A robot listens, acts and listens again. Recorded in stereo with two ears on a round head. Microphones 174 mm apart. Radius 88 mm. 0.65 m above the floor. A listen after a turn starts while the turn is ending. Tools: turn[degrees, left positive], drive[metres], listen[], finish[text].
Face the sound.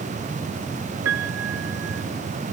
Action: turn[-90]
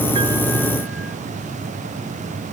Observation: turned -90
Action: listen[]
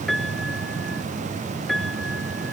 Action: finish[Facing the piano.]